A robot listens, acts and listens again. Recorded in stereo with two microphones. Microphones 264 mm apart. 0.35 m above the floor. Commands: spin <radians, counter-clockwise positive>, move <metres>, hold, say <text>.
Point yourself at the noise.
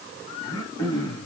spin 0.52
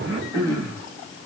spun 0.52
spin -0.26
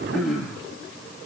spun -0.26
say Found it: throat clearing, straight ahead, 2 to 4 m away.